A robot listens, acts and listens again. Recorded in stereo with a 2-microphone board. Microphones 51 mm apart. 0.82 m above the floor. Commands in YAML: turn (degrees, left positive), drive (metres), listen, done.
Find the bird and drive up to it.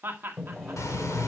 turn: 90
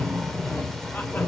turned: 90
drive: 1.0
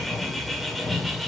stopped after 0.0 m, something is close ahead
done: "Something is in my way. I am facing the bird but have not reached it."